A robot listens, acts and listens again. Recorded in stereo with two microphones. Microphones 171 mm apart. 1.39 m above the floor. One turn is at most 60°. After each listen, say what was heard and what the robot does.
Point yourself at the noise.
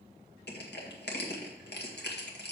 Turn 60° left.
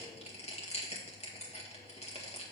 So it is at 40° left. Turn 40° left.
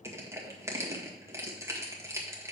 The crushing is now 15° right. Turn 15° right.
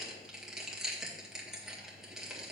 Found it: crushing, straight ahead.